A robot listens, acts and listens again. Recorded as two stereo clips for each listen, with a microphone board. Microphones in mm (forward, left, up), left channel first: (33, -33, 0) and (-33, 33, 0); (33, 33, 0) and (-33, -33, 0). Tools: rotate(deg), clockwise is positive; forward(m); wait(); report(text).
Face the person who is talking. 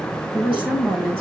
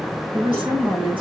rotate(155)
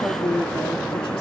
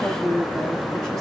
rotate(35)
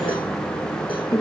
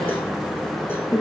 report("Facing the woman speaking, over 4 m away.")